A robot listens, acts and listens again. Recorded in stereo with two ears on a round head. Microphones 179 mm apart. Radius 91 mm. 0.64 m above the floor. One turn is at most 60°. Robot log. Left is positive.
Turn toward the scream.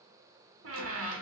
cmd idle
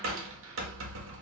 cmd idle
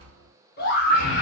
note: The scream: about 55° left or 125° left.
cmd yaw +55
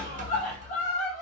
note: So it is at 45° left.
cmd yaw +45
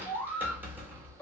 note: The scream is now 10° left.
cmd yaw +10
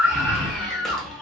end: Found it: a scream, straight ahead, 1 to 2 m away.